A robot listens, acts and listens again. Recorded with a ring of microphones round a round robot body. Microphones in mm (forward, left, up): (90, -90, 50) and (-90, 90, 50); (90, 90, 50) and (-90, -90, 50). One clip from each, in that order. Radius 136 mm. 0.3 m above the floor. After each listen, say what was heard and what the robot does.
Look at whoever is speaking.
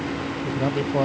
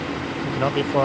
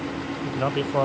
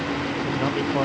The man speaking: 115° left. Turn 115° left.
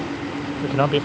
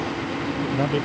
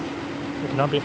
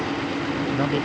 The man speaking is now 10° right. Turn 10° right.
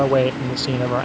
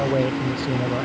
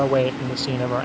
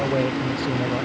Found it: a man speaking, straight ahead.